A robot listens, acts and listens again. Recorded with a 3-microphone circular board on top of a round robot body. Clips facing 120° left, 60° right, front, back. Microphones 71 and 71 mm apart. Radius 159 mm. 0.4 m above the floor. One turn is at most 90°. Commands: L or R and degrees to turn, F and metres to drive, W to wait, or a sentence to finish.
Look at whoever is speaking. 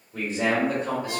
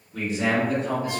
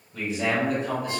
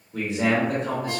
L90
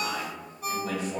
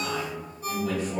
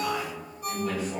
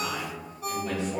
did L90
L90
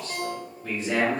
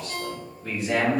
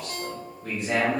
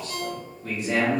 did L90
L15
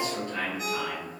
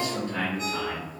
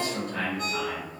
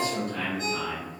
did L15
Found it: a man speaking, straight ahead, over 4 m away.